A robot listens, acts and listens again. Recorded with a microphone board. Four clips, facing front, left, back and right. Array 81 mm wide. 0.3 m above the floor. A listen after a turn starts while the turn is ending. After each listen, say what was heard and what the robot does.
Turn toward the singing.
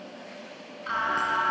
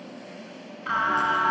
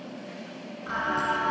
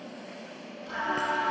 The singing: 75° left. Turn 75° left.
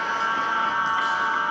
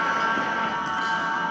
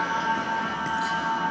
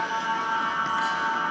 The singing is now 10° right. Turn 10° right.
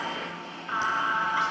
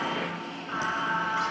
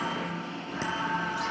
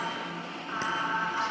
Facing the singing, 2 to 4 m away.